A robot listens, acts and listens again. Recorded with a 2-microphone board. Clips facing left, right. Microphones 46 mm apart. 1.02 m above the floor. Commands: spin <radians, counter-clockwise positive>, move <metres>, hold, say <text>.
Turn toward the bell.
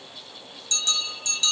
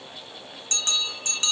spin -0.70
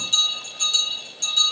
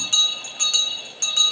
spin -1.57
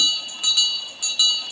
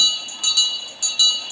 spin 0.26
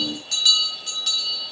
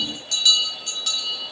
say Facing the bell.